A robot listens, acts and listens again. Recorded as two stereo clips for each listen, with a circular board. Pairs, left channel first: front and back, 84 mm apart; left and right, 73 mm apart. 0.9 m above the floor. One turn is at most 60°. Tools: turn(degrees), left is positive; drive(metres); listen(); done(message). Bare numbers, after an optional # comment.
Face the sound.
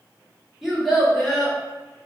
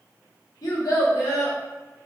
# The child speaking: 85° left.
turn(60)
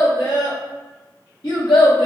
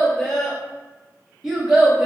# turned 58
# The child speaking is now 10° right.
turn(-10)
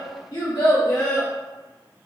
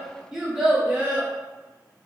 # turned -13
# The child speaking is now 15° right.
turn(-15)
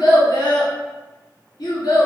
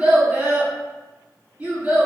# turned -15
# The child speaking is now 15° right.
turn(-15)
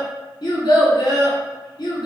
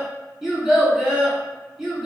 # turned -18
done("Facing the child speaking.")